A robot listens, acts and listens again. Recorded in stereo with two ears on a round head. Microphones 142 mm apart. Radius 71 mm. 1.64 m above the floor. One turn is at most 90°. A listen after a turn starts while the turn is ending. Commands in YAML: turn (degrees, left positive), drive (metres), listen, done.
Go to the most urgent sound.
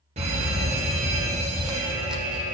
turn: -40
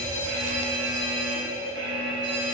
turn: -90
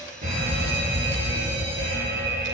turn: -40
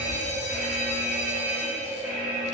turn: -10
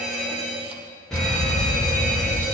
drive: 1.0
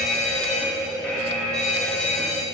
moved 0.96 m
drive: 1.0
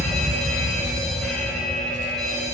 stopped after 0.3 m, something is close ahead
done: "I am next to the fire alarm."